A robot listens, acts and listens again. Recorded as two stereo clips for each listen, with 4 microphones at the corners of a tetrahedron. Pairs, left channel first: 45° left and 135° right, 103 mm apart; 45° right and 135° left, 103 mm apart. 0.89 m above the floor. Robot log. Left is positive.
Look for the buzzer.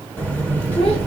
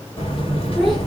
note: The buzzer: 30° right.
cmd yaw -30
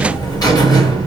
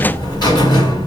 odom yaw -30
end: Facing the buzzer, 1 to 2 m away.